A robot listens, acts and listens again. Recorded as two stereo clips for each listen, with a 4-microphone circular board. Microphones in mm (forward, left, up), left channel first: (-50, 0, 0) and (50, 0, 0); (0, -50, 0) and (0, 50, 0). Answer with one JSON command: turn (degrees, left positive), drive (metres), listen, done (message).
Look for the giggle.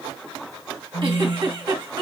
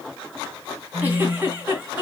{"turn": 20}
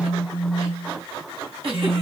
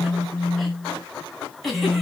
{"done": "Found it: a giggle, straight ahead."}